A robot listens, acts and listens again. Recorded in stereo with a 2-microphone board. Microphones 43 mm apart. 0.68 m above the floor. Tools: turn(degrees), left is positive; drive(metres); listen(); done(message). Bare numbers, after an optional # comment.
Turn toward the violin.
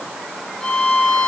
# The violin: about 25° left or 155° left.
turn(25)
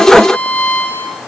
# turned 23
# So it is at 135° left.
turn(135)
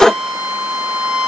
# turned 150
# The violin is now 15° right.
turn(-15)
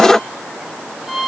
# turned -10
done("Found it: a violin, straight ahead, over 4 m away.")